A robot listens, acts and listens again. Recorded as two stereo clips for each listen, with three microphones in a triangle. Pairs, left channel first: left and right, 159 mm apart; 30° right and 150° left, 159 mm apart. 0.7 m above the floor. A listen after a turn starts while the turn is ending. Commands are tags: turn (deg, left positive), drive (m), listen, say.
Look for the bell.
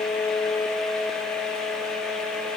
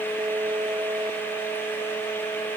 <listen/>
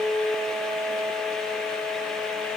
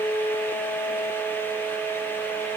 <listen/>
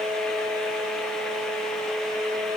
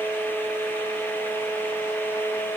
<say>I can't make out a bell to turn to.</say>